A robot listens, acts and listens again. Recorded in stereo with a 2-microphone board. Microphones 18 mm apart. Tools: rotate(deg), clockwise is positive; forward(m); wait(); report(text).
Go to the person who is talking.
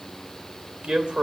rotate(60)
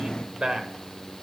rotate(55)
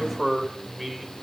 forward(1.0)
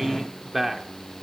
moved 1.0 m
rotate(15)
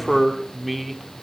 forward(1.0)
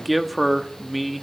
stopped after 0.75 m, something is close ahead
report("Arrived at the man speaking, straight ahead.")